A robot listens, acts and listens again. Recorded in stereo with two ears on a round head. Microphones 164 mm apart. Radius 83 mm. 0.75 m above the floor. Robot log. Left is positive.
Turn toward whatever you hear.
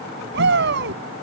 note: The shout: about 65° right or 115° right.
cmd yaw -65
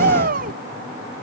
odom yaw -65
note: So it is at 45° right.
cmd yaw -45
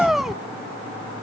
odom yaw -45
end: Found it: a shout, straight ahead.